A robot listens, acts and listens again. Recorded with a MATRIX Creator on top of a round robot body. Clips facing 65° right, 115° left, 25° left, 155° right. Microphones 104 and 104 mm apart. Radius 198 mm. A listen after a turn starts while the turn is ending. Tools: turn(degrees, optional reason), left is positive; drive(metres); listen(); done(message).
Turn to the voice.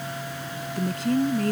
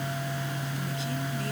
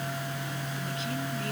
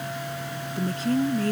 turn(degrees=-105, reason="The woman speaking: 105° right.")
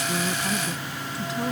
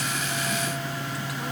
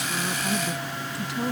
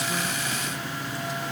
listen()
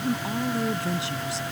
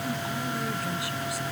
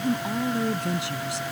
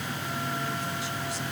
done("Found it: a woman speaking, straight ahead.")